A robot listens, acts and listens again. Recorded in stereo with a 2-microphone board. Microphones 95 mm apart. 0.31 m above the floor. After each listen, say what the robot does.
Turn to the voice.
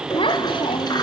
Turn 65° left.
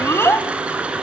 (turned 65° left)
Turn 30° left.
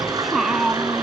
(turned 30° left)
Facing the child speaking.